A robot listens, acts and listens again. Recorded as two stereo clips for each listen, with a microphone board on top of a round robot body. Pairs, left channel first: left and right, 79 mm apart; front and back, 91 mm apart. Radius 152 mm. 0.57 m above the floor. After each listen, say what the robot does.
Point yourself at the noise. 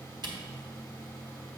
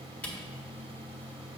Turn 75° right.
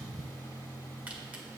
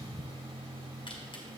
Turn 20° right.
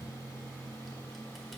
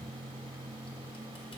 Keep listening.
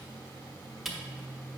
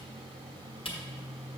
Found it: a camera shutter, straight ahead.